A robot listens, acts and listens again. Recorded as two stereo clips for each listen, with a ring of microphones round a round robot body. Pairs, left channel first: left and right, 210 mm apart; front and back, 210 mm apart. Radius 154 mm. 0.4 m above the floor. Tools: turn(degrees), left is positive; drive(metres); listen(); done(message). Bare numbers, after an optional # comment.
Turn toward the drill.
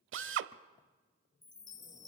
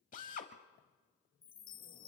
# The drill: 65° right.
turn(-65)
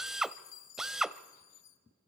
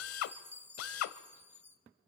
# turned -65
done("Facing the drill.")